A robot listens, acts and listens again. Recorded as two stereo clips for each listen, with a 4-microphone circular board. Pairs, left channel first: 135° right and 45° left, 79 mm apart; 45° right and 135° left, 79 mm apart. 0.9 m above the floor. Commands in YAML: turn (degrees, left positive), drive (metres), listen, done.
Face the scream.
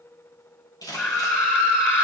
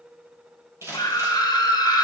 turn: -75
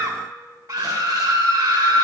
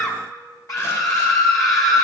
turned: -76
done: "Found it: a scream, straight ahead, 1 to 2 m away."